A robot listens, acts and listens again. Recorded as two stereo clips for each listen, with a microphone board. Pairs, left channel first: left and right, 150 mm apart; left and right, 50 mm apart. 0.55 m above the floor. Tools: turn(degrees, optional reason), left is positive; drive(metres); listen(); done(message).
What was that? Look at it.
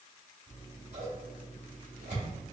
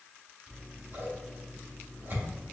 turn(degrees=-55, reason="The scissors: about 55° right or 125° right.")
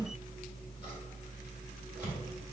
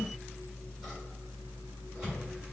turn(degrees=-10, reason="So it is at 10° right.")
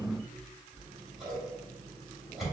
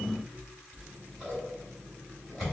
done("Found it: scissors, straight ahead, 1 to 2 m away.")